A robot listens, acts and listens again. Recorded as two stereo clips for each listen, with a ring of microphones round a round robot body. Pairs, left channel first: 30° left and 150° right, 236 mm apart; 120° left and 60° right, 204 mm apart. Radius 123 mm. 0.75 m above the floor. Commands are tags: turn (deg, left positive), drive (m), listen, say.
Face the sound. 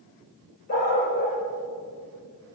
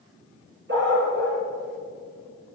<turn deg="-25"/>
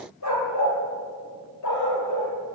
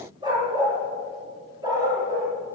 <turn deg="15"/>
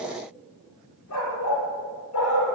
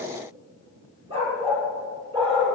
<say>Found it: a dog barking, straight ahead, over 4 m away.</say>